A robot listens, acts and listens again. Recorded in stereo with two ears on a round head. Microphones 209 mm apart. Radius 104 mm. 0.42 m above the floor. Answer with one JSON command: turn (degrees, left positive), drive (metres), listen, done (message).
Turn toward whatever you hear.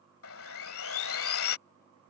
{"turn": 65}
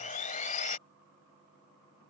{"turn": 35}
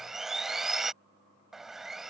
{"done": "Found it: sawing, straight ahead."}